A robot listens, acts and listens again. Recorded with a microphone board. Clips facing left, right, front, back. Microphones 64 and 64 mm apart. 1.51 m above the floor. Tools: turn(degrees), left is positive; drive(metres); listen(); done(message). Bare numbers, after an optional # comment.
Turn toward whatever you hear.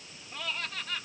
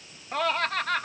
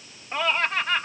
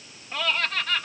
# The laughter: 65° right.
turn(-65)
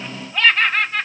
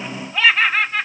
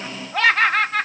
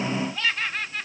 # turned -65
done("Facing the laughter.")